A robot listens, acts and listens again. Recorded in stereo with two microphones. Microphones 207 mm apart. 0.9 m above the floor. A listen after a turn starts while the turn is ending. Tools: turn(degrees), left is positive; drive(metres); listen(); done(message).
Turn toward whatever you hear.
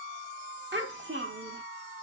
turn(degrees=-65)
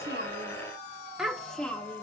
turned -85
done("Found it: a child speaking, straight ahead.")